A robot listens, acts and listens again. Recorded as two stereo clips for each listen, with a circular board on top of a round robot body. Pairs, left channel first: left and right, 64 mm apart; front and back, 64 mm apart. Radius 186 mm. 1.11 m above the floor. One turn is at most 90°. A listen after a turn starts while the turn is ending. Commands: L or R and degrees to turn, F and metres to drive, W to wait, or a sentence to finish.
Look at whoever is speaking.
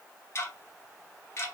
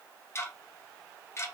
W
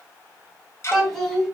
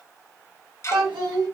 L90
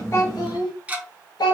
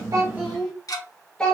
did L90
L80
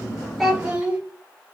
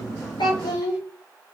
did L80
R15
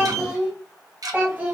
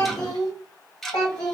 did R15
R20
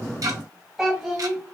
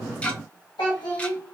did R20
Found it: a child speaking, straight ahead.